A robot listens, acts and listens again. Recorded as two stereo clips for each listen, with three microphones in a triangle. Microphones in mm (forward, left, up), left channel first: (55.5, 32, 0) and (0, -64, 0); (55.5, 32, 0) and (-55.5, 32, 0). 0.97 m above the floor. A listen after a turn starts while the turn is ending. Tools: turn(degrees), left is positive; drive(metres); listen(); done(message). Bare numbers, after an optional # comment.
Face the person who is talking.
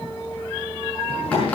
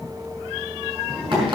# The child speaking: 90° left.
turn(90)
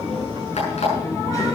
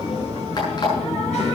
done("Facing the child speaking.")